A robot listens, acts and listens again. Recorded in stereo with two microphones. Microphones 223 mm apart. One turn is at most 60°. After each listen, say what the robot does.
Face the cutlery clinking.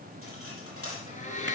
Turn 60° left.
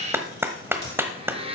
Keep listening.
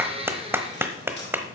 Turn 50° left.
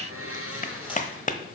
Keep listening.
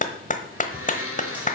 Keep listening.
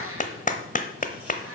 I heard cutlery clinking from this way, but can't make it out now.